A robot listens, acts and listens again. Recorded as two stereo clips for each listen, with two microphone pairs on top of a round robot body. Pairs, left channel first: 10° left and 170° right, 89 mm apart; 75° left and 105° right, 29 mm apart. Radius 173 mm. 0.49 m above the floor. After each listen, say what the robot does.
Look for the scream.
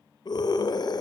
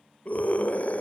Turn 45° left.
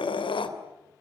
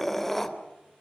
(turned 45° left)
Found it: a scream, straight ahead, 2 to 4 m away.